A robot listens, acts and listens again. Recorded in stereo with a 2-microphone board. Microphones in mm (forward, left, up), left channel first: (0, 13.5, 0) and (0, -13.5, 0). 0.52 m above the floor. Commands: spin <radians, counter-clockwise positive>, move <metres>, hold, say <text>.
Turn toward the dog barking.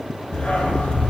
spin 1.05
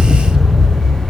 spin 0.52
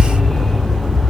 spin 0.52
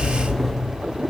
spin 0.17
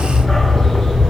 spin 0.26
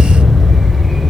say Found it: a dog barking, straight ahead, 2 to 4 m away.